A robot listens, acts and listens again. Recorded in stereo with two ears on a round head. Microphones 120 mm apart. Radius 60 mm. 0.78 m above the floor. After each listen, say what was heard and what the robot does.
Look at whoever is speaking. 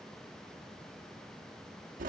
Keep listening.
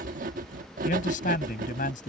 The man speaking: about 70° left or 110° left. Turn 70° left.
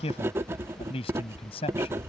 So it is at 45° left. Turn 45° left.
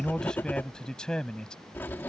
Found it: a man speaking, straight ahead.